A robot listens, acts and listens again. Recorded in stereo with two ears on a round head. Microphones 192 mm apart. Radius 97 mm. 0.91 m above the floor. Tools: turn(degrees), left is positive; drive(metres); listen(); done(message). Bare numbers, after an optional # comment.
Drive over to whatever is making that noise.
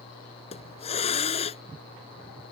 # The hiss: about 30° left or 150° left.
turn(30)
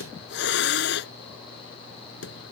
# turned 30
# So it is at 120° left.
turn(120)
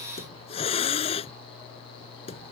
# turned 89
# The hiss is now 30° left.
turn(30)
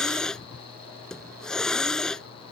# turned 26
drive(1.0)
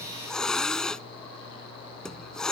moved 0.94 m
drive(1.0)
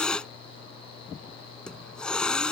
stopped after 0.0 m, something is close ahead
done("Blocked. The hiss is further on, straight ahead.")